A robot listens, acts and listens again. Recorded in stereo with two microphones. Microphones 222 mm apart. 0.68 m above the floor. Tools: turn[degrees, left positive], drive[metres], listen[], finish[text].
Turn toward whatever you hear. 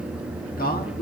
Thought: The man speaking: about 45° left or 135° left.
Action: turn[45]
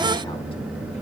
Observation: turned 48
Action: listen[]
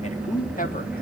Thought: So it is at 40° left.
Action: turn[40]
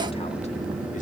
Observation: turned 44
Action: listen[]
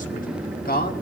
Thought: The man speaking is now 45° left.
Action: turn[45]
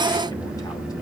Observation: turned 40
Action: listen[]
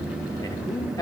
Thought: The man speaking is now 15° left.
Action: turn[15]
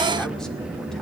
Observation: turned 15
Action: listen[]
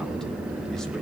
Action: listen[]
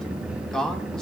Action: finish[Found it: a man speaking, straight ahead.]